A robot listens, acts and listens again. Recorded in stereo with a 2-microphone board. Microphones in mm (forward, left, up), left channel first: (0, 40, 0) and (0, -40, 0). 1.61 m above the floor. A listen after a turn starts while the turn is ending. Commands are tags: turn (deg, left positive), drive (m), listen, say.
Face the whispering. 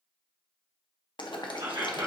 <turn deg="-90"/>
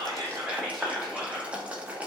<say>Found it: whispering, straight ahead.</say>